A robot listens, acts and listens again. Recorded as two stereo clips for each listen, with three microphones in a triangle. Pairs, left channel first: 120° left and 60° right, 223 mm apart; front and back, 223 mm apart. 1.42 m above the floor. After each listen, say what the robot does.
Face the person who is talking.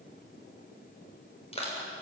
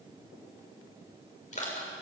Keep listening.
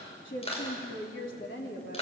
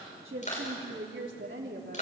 Turn 150° left.
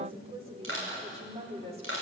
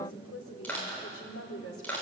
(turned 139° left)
Found it: a woman speaking, straight ahead.